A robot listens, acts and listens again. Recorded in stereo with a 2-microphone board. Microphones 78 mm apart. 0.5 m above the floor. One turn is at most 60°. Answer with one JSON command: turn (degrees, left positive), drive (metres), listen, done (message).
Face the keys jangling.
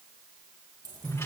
{"turn": -50}
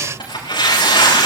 {"listen": true}
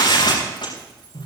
{"listen": true}
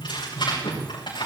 {"done": "I heard keys jangling, but can't make it out now. It was about straight ahead or 80° right."}